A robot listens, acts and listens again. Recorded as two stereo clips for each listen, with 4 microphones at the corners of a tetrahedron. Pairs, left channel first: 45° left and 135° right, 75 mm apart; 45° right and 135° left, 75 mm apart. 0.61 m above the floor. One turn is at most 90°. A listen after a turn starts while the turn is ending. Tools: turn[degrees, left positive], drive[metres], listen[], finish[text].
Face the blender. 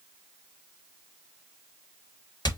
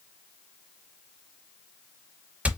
Action: listen[]
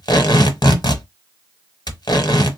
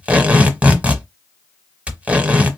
Action: listen[]
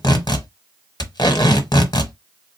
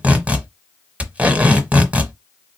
Action: finish[I can't make out a blender, only tape being pulled.]